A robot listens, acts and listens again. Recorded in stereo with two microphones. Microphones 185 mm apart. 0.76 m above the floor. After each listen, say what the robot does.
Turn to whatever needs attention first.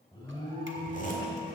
Turn 25° left.
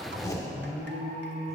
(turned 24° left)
Turn 135° left.
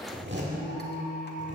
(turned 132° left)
Facing the alarm, 1 to 2 m away.